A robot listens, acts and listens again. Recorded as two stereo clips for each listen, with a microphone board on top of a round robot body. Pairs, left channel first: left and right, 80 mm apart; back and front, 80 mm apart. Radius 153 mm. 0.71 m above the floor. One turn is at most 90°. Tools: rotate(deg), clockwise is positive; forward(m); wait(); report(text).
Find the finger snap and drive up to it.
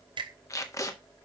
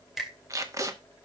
rotate(85)
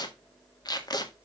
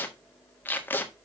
wait()
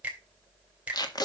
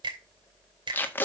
rotate(15)
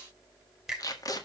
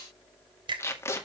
forward(1.0)
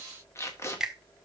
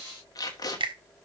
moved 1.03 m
rotate(10)
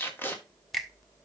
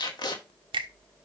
forward(1.0)
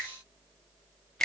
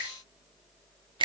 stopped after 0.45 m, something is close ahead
report("Arrived at the finger snap, straight ahead.")